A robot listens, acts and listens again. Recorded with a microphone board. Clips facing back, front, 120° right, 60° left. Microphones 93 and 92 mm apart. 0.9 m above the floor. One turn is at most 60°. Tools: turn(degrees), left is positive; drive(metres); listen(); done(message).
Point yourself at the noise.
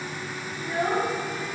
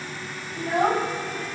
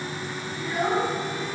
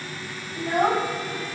turn(degrees=25)
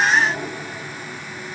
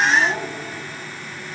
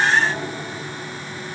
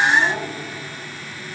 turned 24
done("Found it: a child speaking, straight ahead.")